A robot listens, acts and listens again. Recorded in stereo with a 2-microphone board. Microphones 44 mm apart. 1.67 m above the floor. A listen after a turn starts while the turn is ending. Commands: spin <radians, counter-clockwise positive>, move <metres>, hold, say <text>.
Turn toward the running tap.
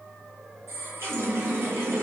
spin -1.22
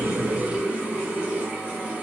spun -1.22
spin -0.52
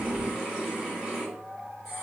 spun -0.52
spin -0.26
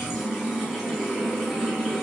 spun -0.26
say Found it: a running tap, straight ahead, 1 to 2 m away.